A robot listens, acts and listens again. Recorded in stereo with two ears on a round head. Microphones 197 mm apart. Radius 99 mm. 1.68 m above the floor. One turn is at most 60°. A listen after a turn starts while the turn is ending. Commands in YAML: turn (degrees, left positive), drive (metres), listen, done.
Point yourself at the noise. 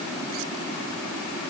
listen: true
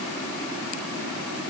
listen: true
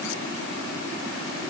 done: "I can't make out anything to turn to."